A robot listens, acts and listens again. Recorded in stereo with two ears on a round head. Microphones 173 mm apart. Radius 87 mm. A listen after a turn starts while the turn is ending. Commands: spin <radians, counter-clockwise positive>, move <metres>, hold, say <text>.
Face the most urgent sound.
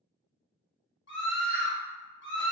spin 1.05
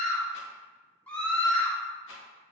spin 0.17
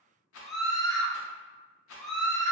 say Found it: a scream, straight ahead.